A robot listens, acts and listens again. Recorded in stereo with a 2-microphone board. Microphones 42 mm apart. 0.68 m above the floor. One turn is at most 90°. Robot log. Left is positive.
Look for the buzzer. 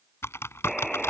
cmd yaw +30
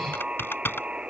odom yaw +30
note: So it is at 20° right.
cmd yaw -20
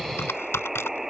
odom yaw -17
end: Facing the buzzer.